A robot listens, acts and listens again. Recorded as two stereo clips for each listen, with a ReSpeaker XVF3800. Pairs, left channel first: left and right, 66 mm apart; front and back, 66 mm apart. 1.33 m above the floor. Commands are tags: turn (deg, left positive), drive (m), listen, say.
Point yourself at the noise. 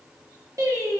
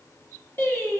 <turn deg="-55"/>
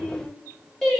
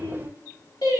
<say>Found it: singing, straight ahead.</say>